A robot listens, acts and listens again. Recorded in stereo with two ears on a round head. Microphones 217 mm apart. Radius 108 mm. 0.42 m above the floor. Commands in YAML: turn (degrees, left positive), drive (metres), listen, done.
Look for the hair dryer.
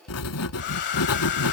turn: 50
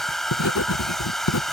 done: "Facing the hair dryer."